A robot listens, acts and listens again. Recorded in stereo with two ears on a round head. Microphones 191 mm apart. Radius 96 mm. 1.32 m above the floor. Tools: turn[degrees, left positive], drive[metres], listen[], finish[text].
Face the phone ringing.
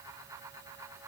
Action: listen[]
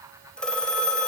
Action: turn[30]
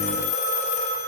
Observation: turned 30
Thought: So it is at 145° left.
Action: turn[145]
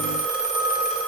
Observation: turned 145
Action: finish[Facing the phone ringing.]